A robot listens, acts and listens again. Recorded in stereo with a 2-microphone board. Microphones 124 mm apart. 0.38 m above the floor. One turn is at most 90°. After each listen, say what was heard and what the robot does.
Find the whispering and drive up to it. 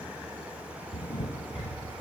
Keep listening.
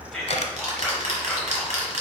Turn 30° left.
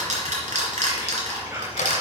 So it is at 25° right. Turn 25° right.
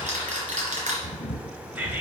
The whispering is now 15° right. Turn 15° right.
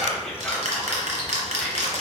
Drive 1.0 m forward.
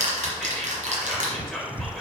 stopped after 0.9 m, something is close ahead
Arrived at the whispering, straight ahead.